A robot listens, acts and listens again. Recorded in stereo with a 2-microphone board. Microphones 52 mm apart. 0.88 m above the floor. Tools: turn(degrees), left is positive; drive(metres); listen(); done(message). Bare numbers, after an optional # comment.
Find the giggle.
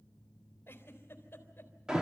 # The giggle: about 40° left or 140° left.
turn(40)
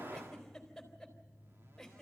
done("Facing the giggle, 2 to 4 m away.")